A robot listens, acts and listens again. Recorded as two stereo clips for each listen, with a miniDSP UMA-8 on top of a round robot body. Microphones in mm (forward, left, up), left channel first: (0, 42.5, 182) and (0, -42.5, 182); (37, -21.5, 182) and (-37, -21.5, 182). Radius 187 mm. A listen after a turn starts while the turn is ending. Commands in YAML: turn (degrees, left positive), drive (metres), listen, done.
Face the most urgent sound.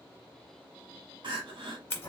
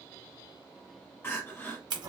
turn: -60
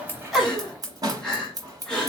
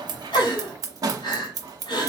done: "Facing the crying, under 1 m away."